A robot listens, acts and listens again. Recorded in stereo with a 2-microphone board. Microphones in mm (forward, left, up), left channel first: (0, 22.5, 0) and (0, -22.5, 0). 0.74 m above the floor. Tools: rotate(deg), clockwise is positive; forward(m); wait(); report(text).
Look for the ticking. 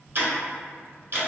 rotate(55)
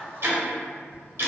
rotate(70)
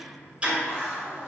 rotate(30)
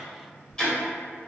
rotate(-15)
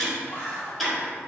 report("Found it: ticking, straight ahead.")